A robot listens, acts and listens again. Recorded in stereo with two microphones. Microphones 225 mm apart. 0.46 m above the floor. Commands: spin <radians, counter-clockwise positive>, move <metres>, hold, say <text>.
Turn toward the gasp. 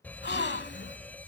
spin 0.87
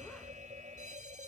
hold
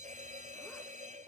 say I heard a gasp, but can't make it out now. It was about straight ahead or 80° left.